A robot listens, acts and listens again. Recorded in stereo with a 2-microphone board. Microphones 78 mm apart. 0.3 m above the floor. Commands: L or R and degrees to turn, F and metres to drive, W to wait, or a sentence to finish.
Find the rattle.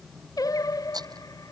R60
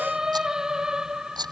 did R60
R65
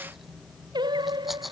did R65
Facing the rattle.